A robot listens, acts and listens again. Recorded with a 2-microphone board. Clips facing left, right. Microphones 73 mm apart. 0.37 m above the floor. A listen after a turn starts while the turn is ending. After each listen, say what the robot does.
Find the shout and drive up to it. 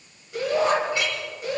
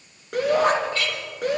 Turn 75° right.
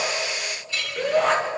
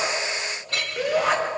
Drive 1.0 m forward.
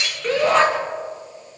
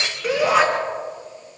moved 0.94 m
Turn 10° right.
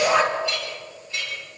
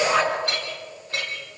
Drive 1.0 m forward.
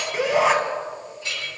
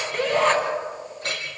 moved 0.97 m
Turn 10° left.
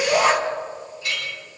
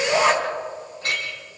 Drive 1.0 m forward.
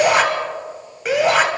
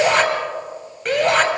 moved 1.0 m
Turn 10° left.
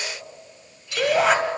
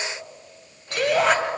Drive 1.0 m forward.
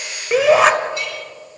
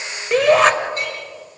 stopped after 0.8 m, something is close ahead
Arrived at the shout, straight ahead.